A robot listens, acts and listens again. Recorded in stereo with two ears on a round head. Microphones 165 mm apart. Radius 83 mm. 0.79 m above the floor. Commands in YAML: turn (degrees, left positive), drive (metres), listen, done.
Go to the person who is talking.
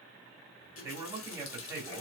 turn: -15
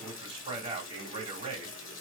turn: -145
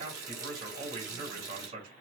turn: -45
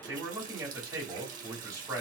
turn: -15
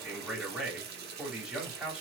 drive: 1.0
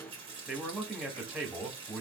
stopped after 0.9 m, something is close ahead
done: "Arrived at the man speaking, straight ahead."